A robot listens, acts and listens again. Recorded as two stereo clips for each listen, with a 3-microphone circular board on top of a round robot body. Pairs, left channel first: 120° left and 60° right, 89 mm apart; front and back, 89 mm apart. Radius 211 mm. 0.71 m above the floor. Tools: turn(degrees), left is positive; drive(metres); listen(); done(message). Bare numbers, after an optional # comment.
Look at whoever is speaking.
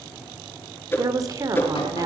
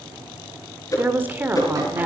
# The woman speaking: 110° right.
turn(-110)
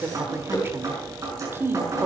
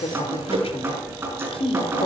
done("Found it: a woman speaking, straight ahead, 2 to 4 m away.")